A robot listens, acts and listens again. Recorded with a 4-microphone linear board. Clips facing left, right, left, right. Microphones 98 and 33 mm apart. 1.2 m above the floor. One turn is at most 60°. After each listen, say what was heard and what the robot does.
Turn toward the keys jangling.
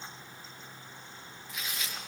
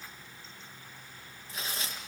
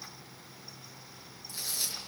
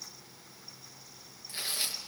Keep listening.
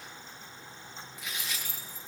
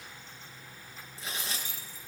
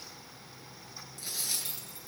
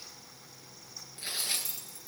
The keys jangling: about 50° left or 130° left. Turn 50° left.
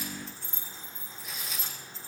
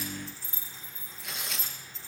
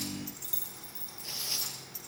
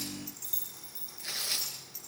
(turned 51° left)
Facing the keys jangling, over 4 m away.